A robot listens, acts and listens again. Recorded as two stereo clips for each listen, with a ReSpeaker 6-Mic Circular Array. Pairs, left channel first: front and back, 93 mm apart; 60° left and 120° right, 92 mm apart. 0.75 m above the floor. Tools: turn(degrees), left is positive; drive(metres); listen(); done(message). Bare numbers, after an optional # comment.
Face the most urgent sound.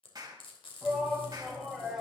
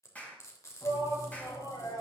# The shout: 95° left.
turn(95)
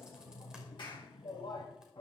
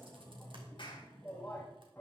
# The shout is now 10° right.
turn(-10)
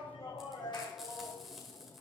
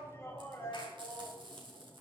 done("Facing the shout, over 4 m away.")